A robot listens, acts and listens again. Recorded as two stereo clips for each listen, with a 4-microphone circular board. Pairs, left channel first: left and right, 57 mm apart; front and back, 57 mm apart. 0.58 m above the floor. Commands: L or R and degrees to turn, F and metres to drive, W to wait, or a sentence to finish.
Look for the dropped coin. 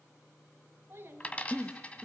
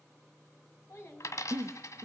L20
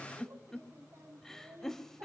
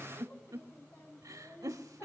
I heard a dropped coin from this way, but can't make it out now.